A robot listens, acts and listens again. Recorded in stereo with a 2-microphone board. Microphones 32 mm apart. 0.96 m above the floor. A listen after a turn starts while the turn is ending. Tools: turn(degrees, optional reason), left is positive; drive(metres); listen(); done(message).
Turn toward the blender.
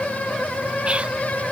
listen()
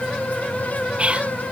listen()
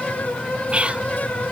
done("I can't make out a blender to turn to.")